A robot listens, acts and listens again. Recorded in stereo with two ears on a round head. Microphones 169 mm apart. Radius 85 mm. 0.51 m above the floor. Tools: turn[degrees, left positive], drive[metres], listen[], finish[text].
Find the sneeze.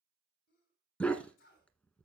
Thought: The sneeze: about 50° left or 130° left.
Action: turn[50]
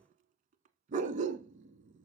Action: listen[]
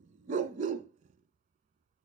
Action: finish[I heard a sneeze, but can't make it out now. It was about straight ahead or 80° left.]